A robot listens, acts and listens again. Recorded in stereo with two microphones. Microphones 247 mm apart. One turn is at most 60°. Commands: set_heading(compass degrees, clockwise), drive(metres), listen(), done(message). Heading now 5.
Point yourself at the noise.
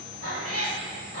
set_heading(65)
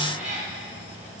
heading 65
set_heading(95)
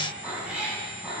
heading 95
done("Found it: a cat meowing, straight ahead, over 4 m away.")